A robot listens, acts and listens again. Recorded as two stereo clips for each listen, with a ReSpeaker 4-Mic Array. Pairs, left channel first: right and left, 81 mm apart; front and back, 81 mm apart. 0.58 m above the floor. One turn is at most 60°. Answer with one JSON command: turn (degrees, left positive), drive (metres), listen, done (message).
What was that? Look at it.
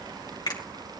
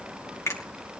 {"turn": -55}
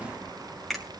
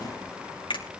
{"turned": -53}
{"done": "Facing the finger snap, 2 to 4 m away."}